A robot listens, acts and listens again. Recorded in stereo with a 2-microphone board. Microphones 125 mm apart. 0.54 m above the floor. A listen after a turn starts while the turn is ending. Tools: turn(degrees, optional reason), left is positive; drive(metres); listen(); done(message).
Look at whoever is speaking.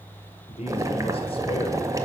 turn(degrees=45, reason="The man speaking: about 45° left or 135° left.")
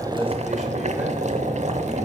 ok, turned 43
listen()
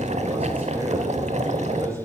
listen()
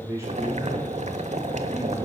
turn(degrees=-25, reason="So it is at 25° right.")
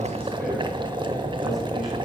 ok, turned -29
listen()
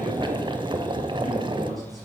listen()
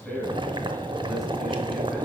done("Found it: a man speaking, straight ahead, 2 to 4 m away.")